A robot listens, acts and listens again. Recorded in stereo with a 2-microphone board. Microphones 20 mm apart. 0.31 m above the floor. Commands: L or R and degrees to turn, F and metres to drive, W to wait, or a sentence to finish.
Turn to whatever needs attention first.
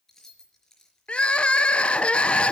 L90
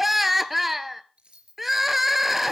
R10
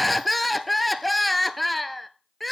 Facing the crying, under 1 m away.